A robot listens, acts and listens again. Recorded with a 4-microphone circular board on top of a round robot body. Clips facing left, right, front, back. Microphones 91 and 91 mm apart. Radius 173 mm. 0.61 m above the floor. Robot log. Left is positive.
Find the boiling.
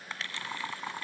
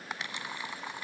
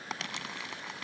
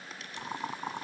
note: The boiling: 165° left.
cmd yaw +165
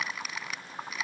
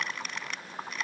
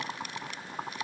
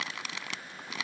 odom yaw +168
end: Facing the boiling.